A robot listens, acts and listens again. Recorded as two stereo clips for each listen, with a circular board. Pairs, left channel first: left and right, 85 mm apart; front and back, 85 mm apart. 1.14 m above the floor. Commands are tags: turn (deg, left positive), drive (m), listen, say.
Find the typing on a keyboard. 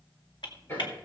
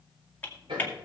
<turn deg="70"/>
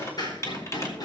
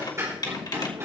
<turn deg="35"/>
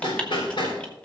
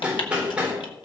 <listen/>
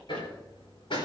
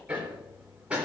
<listen/>
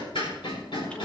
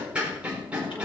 <say>I heard typing on a keyboard from this way, but can't make it out now.</say>